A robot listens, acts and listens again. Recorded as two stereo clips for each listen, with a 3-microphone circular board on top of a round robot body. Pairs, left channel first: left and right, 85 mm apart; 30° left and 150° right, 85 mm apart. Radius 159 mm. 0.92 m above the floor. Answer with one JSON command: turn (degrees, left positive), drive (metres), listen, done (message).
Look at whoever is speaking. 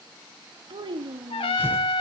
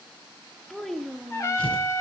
{"turn": -55}
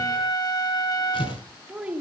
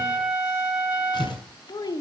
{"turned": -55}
{"turn": -10}
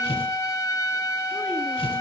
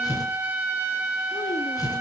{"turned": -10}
{"listen": true}
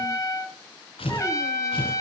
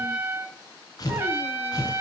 {"listen": true}
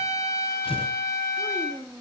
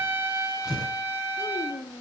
{"done": "Found it: a child speaking, straight ahead, 1 to 2 m away."}